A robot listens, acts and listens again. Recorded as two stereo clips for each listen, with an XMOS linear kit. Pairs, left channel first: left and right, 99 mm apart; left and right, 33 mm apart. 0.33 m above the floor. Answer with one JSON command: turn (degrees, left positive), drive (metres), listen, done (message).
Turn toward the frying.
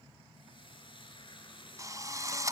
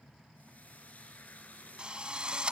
{"turn": 55}
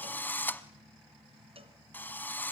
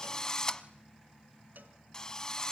{"listen": true}
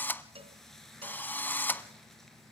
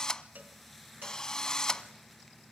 {"done": "Found it: frying, straight ahead, over 4 m away."}